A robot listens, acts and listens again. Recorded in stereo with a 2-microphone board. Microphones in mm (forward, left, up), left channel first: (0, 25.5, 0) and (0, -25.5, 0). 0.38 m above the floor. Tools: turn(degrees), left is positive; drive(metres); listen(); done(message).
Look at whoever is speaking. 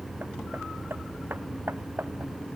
listen()
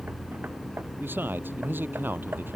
turn(degrees=-40)
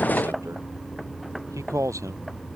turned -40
turn(degrees=-95)
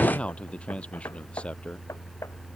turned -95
turn(degrees=20)
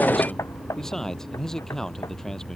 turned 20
turn(degrees=10)
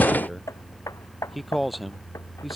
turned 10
done("Found it: a man speaking, straight ahead.")